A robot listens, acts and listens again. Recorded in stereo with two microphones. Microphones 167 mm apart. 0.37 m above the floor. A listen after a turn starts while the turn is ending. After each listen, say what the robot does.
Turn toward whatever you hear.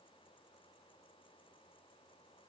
Keep listening.
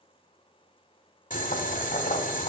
Turn 50° left.
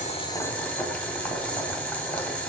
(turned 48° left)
Turn 10° left.
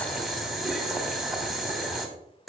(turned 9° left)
Facing the boiling.